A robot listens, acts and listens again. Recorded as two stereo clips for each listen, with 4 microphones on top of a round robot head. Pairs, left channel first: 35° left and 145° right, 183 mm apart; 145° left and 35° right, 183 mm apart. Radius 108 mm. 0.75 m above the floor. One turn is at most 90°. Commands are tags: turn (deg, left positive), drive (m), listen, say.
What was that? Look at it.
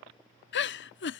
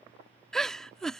<turn deg="60"/>
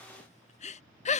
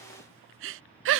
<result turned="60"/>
<turn deg="-20"/>
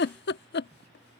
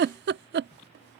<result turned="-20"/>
<say>Found it: a giggle, straight ahead.</say>